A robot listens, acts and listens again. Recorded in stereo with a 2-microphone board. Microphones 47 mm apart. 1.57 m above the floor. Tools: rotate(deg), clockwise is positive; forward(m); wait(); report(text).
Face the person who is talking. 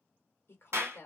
rotate(-50)
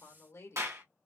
rotate(-85)
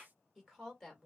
report("Found it: a woman speaking, straight ahead, 2 to 4 m away.")